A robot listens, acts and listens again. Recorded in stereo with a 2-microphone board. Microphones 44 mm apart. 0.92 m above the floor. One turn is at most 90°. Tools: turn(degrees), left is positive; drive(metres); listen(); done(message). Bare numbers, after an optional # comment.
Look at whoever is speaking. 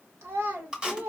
turn(-90)
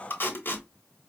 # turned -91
listen()
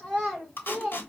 done("Facing the child speaking.")